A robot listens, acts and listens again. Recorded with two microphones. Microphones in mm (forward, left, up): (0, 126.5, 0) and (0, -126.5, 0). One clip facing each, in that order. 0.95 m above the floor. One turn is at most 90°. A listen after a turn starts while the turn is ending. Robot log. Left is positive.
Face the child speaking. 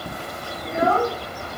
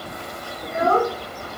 note: The child speaking: about 45° right or 135° right.
cmd yaw -45
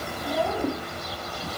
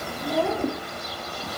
cmd idle
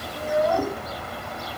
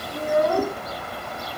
note: So it is at 120° right.
cmd yaw -90
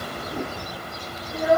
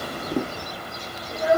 note: The child speaking is now 35° right.
cmd yaw -35
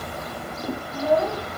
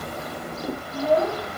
note: The child speaking is now 15° left.
cmd yaw +15
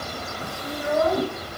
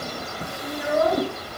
end: Facing the child speaking.